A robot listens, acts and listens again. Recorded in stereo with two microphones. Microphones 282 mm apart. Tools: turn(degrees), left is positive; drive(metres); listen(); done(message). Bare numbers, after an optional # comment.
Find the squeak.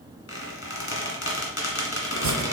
# The squeak: about 55° left or 125° left.
turn(55)
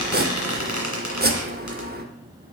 # So it is at 70° left.
turn(70)
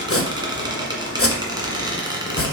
# The squeak is now 15° right.
turn(-15)
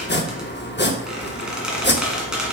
done("Facing the squeak, 1 to 2 m away.")